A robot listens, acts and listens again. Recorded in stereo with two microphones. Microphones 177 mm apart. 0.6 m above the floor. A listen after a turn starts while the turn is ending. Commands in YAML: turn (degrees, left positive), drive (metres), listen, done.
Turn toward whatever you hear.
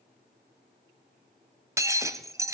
turn: -15
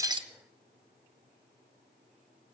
listen: true
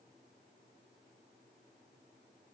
done: "I heard breaking glass, but can't make it out now. It was about straight ahead or 150° right."